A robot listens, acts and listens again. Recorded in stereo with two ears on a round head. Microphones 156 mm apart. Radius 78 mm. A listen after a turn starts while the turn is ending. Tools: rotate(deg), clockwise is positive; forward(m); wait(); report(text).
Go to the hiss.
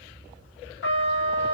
wait()
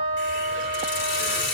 rotate(-70)
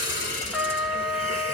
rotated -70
wait()
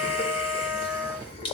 rotate(-35)
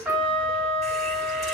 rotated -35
wait()
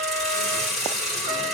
forward(1.0)
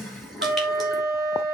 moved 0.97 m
forward(1.0)
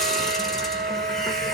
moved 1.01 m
wait()
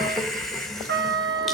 forward(1.0)
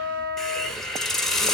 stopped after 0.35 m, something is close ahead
report("I am next to the hiss.")